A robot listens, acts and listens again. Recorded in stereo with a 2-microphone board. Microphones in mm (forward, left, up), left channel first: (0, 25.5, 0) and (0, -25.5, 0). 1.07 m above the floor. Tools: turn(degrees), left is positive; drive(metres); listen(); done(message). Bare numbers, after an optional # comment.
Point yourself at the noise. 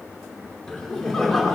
turn(30)
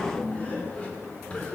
# So it is at 155° left.
turn(155)
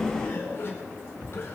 # The laughter is now 50° left.
turn(50)
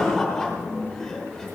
# The laughter is now 10° left.
turn(10)
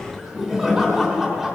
done("Facing the laughter.")